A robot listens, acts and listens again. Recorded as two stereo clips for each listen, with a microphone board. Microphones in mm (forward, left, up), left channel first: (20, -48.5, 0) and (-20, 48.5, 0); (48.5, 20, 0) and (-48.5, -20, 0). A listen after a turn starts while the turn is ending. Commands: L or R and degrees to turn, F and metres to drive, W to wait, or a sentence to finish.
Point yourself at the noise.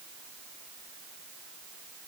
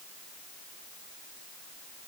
W
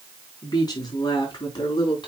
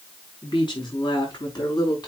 R25
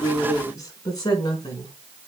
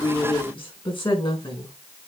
R20
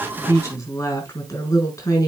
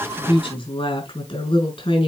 R10
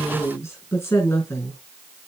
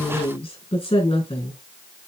Facing the woman speaking.